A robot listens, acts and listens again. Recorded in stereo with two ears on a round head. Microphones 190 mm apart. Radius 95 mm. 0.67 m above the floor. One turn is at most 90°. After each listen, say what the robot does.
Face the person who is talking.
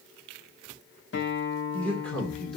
Turn 30° left.
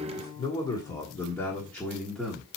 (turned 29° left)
Turn 30° left.
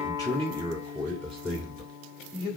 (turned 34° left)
Turn 30° right.
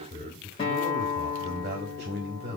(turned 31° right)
Turn 90° right.
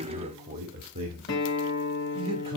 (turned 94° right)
Turn 45° right.
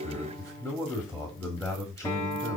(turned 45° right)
Facing the man speaking, 1 to 2 m away.